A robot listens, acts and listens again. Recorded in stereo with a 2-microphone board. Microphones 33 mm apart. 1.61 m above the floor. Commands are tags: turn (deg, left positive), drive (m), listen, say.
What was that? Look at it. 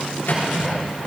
<turn deg="75"/>
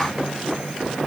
<listen/>
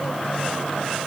<listen/>
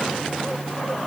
<say>I heard a microwave, but can't make it out now. It was about straight ahead or 30° left.</say>